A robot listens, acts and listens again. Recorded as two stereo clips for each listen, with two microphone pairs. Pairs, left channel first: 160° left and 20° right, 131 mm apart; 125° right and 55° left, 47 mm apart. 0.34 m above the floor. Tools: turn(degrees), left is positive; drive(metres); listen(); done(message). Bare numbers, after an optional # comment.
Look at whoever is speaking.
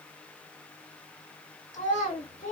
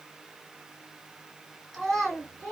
# The child speaking: 145° left.
turn(145)
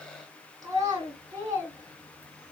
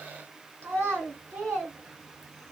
# The child speaking is now 40° left.
turn(40)
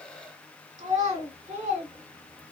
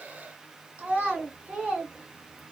done("Found it: a child speaking, straight ahead, 1 to 2 m away.")